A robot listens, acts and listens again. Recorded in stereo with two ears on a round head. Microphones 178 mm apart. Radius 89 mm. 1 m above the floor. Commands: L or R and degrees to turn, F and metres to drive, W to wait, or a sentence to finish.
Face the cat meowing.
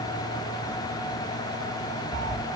R60
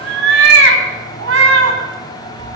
R70
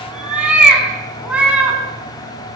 Found it: a cat meowing, straight ahead, over 4 m away.